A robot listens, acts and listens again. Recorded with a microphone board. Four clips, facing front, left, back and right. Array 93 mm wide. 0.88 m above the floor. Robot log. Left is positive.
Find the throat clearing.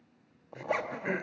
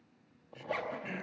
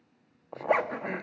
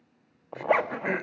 note: The throat clearing: 80° right.
cmd yaw -80
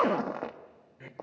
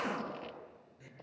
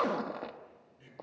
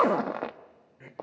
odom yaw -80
note: The throat clearing is now 35° right.
cmd yaw -35
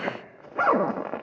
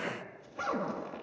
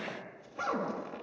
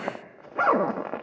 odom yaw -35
cmd idle
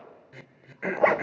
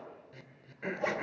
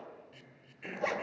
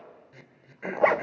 end: Facing the throat clearing, 1 to 2 m away.